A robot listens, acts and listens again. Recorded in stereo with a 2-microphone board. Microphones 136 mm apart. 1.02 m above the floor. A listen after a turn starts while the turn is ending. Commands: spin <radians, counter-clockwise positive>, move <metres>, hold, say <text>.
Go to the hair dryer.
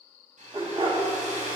spin -1.22
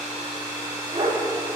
spin -0.44
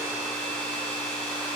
spin 0.17
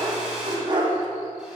move 1.0
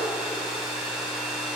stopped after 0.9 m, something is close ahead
say Arrived at the hair dryer, straight ahead.